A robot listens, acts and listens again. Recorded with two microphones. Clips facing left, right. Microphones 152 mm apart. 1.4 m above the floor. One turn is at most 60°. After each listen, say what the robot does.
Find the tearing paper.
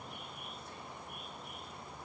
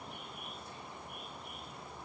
Keep listening.
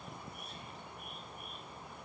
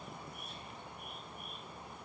Keep listening.
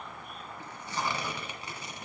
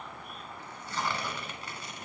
Turn 15° left.
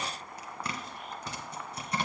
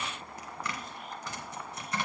Turn 60° left.
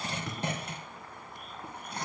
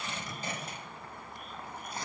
Turn 60° left.
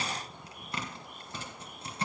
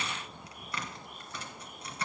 Turn 25° left.
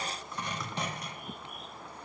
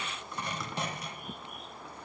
Facing the tearing paper.